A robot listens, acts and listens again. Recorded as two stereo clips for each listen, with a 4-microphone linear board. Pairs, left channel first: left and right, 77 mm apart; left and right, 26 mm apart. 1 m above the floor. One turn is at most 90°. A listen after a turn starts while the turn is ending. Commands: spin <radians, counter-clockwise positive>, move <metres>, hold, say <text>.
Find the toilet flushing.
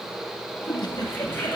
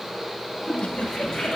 spin 0.52
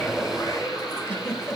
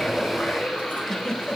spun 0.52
spin 1.57
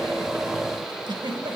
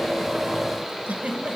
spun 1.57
spin 0.52
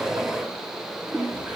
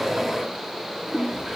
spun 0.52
spin -0.26
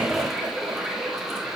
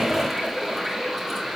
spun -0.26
say Found it: a toilet flushing, straight ahead.